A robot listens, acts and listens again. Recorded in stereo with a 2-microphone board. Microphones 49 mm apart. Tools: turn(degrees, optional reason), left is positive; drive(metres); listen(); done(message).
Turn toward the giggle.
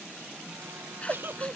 turn(degrees=-50, reason="The giggle: about 50° right or 130° right.")
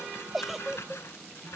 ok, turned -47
done("Facing the giggle.")